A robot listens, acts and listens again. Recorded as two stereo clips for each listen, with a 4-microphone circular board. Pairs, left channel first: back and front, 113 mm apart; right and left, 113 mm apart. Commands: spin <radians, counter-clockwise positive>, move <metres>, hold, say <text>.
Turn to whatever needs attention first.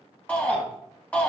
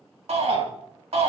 spin 1.75
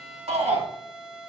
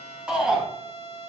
spin 0.17
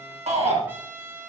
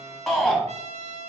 say Facing the shout, 2 to 4 m away.